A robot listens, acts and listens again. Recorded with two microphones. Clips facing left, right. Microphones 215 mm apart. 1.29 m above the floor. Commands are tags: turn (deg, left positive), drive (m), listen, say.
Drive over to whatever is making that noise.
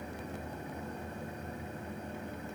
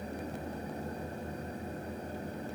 <listen/>
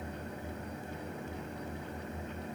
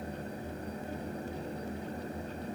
<listen/>
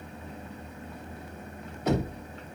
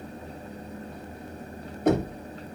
<turn deg="-50"/>
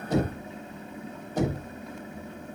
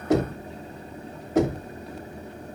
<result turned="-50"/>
<turn deg="-80"/>
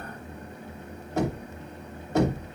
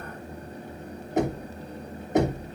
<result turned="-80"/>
<turn deg="-20"/>
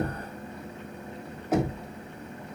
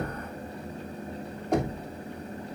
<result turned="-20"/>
<drive m="1.0"/>
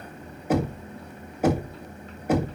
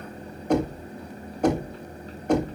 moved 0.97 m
<drive m="1.0"/>
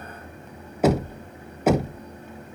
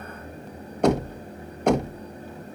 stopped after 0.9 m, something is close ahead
<say>Arrived at the knocking, straight ahead.</say>